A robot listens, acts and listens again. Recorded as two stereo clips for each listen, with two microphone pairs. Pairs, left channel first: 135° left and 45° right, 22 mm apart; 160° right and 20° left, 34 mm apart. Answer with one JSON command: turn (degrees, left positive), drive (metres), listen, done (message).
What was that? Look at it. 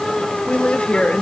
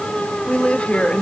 {"turn": 145}
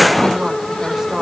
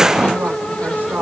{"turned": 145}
{"turn": 25}
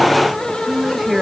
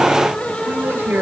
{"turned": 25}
{"turn": 20}
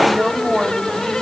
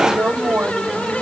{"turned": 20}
{"turn": 10}
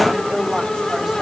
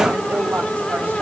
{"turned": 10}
{"listen": true}
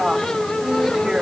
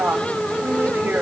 {"done": "Facing the woman speaking."}